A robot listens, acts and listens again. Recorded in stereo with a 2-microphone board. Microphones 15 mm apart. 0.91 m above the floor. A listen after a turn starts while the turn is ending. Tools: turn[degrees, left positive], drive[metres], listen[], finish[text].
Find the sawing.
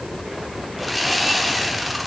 Action: turn[30]
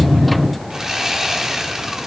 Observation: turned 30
Thought: So it is at 30° right.
Action: turn[-30]
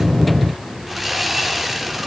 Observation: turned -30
Thought: The sawing is now 10° right.
Action: turn[-10]
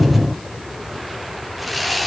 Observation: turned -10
Action: finish[Found it: sawing, straight ahead.]